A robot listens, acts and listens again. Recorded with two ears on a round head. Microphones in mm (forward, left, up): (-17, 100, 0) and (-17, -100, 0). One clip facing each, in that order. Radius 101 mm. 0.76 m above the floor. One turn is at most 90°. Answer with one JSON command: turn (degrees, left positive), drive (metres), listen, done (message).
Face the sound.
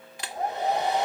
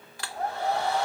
{"turn": 20}
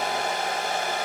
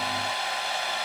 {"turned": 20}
{"turn": 90}
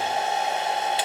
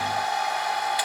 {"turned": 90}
{"turn": 20}
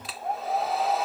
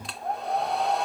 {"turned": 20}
{"done": "Facing the hair dryer."}